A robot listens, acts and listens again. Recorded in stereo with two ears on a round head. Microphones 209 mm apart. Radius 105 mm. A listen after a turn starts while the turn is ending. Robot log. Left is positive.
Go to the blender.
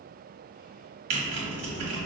cmd idle
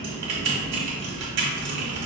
cmd idle
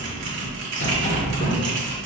end: I can't make out a blender, only a sliding door and typing on a keyboard.